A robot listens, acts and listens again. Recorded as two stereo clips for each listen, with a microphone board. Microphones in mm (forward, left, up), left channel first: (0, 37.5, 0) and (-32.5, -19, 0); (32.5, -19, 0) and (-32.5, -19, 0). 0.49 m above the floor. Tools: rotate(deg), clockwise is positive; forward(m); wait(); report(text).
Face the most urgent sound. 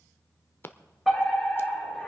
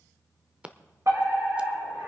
rotate(-150)
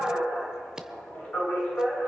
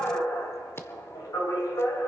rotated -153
report("Found it: a fire alarm, straight ahead, over 4 m away.")